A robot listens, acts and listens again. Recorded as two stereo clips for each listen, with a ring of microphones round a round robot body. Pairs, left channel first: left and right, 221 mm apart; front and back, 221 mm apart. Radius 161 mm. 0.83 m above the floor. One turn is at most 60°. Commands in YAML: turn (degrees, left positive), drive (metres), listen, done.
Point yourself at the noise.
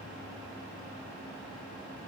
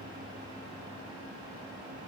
listen: true
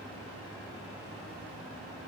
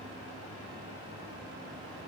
listen: true
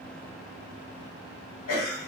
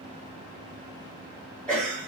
turn: 60
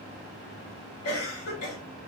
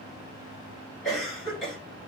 turn: 60
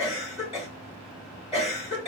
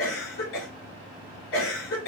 turn: 30
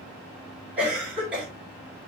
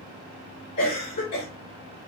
done: "Facing the cough, 2 to 4 m away."